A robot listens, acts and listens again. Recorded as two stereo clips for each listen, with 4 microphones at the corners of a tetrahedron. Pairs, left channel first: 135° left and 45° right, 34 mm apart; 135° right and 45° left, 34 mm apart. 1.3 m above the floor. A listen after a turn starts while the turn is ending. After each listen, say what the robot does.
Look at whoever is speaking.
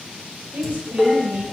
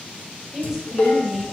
Turn 25° right.
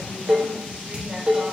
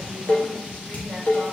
Turn 15° left.
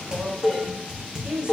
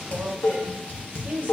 Turn 15° left.
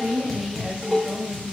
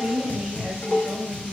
Turn 20° left.
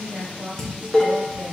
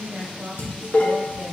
Facing the woman speaking, 2 to 4 m away.